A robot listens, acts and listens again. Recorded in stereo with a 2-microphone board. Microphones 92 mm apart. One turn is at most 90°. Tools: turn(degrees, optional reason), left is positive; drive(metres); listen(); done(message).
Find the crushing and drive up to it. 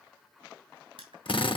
turn(degrees=-65, reason="The crushing: about 65° right or 115° right.")
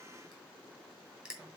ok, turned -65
turn(degrees=-10, reason="So it is at 10° right.")
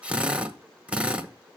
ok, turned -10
listen()
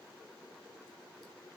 listen()
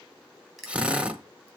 drive(metres=1.0)
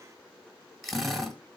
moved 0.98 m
drive(metres=1.0)
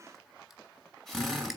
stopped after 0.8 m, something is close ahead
listen()
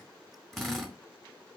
listen()
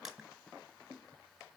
turn(degrees=-10, reason="The crushing is now 10° right.")
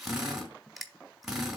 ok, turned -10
done("Arrived at the crushing, straight ahead.")